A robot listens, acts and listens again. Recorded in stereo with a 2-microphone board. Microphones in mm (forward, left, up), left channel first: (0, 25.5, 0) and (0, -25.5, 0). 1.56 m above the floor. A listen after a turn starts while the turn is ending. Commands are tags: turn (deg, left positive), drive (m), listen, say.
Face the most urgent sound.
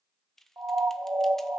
<turn deg="-65"/>
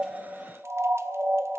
<turn deg="-50"/>
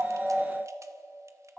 <listen/>
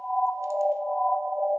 <say>Facing the siren.</say>